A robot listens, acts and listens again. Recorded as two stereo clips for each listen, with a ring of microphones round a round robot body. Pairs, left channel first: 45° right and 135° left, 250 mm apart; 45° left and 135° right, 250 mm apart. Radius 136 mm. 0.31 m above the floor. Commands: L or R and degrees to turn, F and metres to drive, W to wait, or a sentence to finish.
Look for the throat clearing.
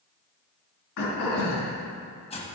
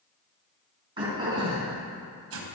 R65
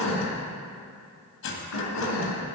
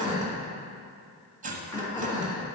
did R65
R35
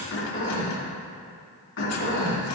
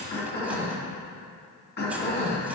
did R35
Facing the throat clearing, 2 to 4 m away.